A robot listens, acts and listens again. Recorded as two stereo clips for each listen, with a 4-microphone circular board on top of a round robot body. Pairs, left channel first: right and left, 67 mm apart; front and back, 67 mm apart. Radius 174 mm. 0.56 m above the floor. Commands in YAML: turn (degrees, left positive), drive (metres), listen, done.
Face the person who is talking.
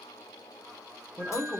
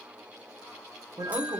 turn: -155
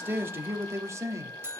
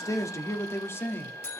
turn: 55
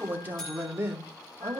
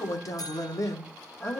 turn: 45
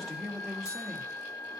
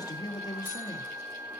done: "Facing the man speaking, 2 to 4 m away."